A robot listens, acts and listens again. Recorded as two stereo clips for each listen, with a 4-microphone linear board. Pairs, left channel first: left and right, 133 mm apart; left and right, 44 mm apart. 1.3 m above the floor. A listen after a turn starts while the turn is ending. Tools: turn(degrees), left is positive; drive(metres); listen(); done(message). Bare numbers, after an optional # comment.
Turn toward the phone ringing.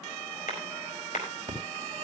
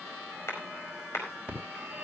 # The phone ringing: about 30° right or 150° right.
turn(-30)
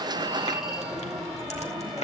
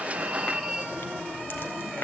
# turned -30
done("Facing the phone ringing.")